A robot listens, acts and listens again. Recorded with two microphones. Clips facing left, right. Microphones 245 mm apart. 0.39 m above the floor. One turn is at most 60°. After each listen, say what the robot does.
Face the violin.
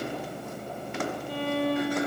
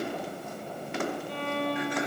Turn 30° left.
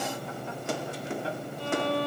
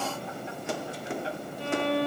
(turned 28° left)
Turn 25° right.
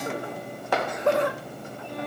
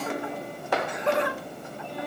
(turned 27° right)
Keep listening.
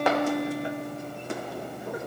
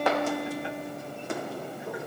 Facing the violin.